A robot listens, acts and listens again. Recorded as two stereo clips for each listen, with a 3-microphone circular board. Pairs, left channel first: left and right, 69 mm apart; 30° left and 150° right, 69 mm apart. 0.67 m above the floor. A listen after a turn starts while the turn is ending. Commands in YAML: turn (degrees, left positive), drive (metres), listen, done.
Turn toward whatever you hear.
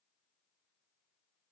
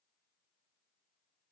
listen: true
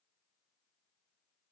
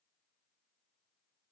listen: true
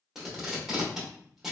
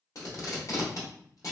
done: "Found it: tape being pulled, straight ahead, 1 to 2 m away."